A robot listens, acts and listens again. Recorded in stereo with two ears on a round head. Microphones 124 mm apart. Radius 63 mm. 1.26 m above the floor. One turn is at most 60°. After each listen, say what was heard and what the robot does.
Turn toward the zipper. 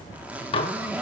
Turn 30° right.
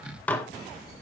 Keep listening.
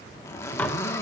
So it is at 20° left. Turn 20° left.
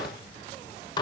Keep listening.
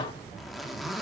Facing the zipper.